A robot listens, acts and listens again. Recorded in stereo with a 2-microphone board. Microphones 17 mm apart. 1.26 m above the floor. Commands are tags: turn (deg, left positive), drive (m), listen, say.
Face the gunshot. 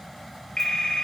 <listen/>
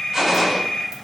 <turn deg="-35"/>
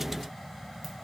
<listen/>
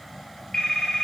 <say>I heard a gunshot, but can't make it out now. It was about straight ahead or 110° right.</say>